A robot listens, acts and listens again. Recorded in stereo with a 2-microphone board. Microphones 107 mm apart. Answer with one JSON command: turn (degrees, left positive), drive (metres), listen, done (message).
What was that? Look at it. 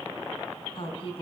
{"turn": 60}
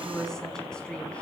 {"turn": 10}
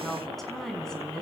{"done": "Found it: a woman speaking, straight ahead."}